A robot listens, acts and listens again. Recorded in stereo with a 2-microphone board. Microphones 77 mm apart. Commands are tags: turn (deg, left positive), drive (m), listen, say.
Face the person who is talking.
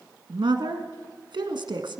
<turn deg="-90"/>
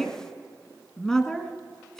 <turn deg="10"/>
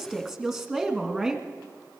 <say>Found it: a woman speaking, straight ahead.</say>